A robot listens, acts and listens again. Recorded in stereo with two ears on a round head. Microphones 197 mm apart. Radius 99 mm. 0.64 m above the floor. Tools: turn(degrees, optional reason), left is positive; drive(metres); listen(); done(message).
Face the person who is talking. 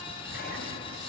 listen()
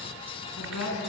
turn(degrees=90)
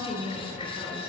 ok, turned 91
done("Found it: a woman speaking, straight ahead, over 4 m away.")